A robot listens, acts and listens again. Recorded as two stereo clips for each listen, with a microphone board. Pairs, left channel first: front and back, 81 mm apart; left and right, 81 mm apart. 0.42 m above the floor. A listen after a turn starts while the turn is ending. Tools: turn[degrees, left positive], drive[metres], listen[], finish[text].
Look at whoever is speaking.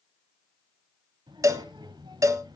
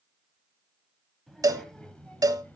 Thought: The child speaking: 160° left.
Action: turn[160]
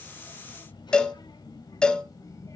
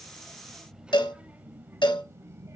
Thought: The child speaking is now 40° right.
Action: turn[-40]
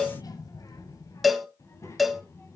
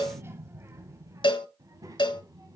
Thought: The child speaking is now 50° right.
Action: turn[-50]
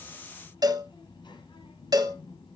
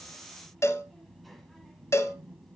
Action: finish[Found it: a child speaking, straight ahead.]